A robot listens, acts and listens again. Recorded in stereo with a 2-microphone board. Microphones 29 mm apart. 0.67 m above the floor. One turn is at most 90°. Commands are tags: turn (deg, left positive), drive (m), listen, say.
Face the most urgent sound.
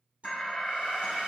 <turn deg="30"/>
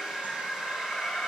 <turn deg="90"/>
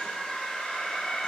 <turn deg="25"/>
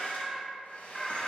<say>Facing the alarm, under 1 m away.</say>